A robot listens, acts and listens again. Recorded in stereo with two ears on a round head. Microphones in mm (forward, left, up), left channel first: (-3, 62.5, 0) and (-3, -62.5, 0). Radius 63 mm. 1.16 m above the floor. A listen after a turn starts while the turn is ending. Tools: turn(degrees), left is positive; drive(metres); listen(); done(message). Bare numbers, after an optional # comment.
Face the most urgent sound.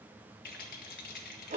listen()
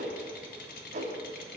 listen()
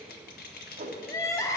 # The crying: about 20° left or 160° left.
turn(20)
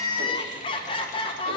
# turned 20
# So it is at 135° left.
turn(135)
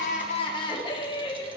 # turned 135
# The crying is now 40° left.
turn(40)
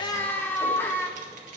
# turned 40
# The crying is now 15° left.
turn(15)
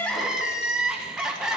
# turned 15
done("Found it: crying, straight ahead, 1 to 2 m away.")